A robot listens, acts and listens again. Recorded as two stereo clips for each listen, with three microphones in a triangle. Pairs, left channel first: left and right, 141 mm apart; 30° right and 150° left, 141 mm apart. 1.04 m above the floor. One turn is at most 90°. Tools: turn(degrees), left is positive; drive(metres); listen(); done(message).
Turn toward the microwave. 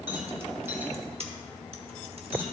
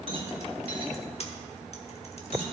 listen()
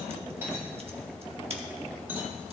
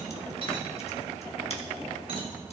listen()
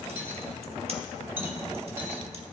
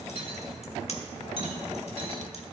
done("I can't make out a microwave, only a rattle.")